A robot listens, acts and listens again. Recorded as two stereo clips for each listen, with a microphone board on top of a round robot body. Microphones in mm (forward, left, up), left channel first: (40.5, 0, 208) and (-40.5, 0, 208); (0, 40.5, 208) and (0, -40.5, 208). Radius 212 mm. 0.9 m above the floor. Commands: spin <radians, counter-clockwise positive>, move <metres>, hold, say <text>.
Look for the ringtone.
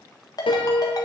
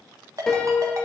spin -0.70
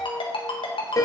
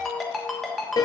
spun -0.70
say Facing the ringtone, 1 to 2 m away.